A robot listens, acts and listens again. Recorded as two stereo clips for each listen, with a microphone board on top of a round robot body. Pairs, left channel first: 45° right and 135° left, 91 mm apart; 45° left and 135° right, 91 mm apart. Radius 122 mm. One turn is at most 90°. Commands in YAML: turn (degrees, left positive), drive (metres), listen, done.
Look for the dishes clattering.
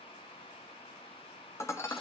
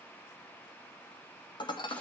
turn: 15
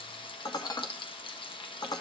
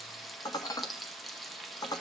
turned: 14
done: "Found it: dishes clattering, straight ahead."